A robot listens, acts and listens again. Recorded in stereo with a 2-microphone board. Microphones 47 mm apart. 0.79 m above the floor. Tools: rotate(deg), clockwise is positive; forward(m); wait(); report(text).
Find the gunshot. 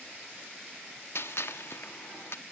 rotate(-70)
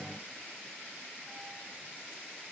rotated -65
wait()
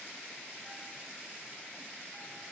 report("I heard a gunshot, but can't make it out now. It was about 5° left or 45° left.")